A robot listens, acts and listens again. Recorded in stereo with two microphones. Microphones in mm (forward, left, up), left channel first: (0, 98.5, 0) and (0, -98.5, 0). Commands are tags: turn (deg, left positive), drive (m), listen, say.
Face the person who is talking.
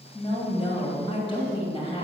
<turn deg="25"/>
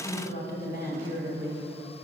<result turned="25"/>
<turn deg="125"/>
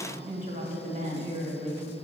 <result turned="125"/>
<turn deg="-45"/>
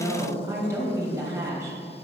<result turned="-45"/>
<turn deg="-15"/>
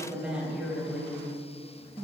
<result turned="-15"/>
<say>Facing the woman speaking, 1 to 2 m away.</say>